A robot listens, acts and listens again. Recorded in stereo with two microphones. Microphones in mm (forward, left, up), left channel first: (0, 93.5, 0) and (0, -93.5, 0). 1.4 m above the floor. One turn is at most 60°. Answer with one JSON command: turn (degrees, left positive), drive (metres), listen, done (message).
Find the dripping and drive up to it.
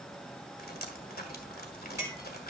{"turn": 60}
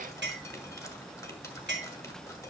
{"turn": 20}
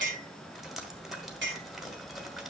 {"drive": 1.0}
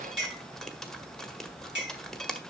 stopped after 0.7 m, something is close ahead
{"done": "I am next to the dripping."}